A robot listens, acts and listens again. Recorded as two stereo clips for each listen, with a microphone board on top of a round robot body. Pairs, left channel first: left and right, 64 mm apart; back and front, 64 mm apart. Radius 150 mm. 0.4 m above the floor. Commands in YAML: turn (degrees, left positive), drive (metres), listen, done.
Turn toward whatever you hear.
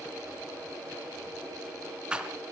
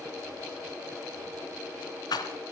turn: -165
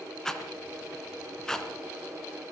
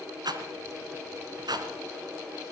turn: 10
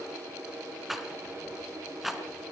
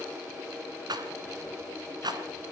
done: "Found it: a rattle, straight ahead."